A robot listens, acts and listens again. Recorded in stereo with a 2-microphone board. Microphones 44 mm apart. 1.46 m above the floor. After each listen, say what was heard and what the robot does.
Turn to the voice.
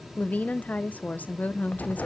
The woman speaking: about 35° left or 145° left. Turn 35° left.
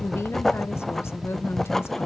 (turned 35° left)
So it is at 110° left. Turn 110° left.
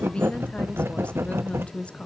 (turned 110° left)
The woman speaking is now 25° left. Turn 25° left.
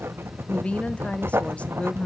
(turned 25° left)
The woman speaking is now 30° left. Turn 30° left.
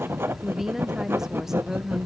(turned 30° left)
The woman speaking is now 10° right. Turn 10° right.
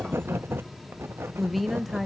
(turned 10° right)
Facing the woman speaking, under 1 m away.